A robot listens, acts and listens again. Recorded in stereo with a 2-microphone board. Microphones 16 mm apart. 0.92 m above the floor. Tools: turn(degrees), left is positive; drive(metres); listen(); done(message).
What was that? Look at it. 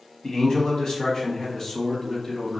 turn(degrees=25)
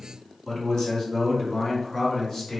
turn(degrees=40)
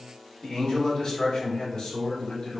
turn(degrees=110)
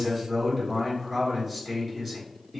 turn(degrees=-20)
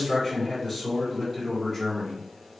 done("Facing the man speaking, 2 to 4 m away.")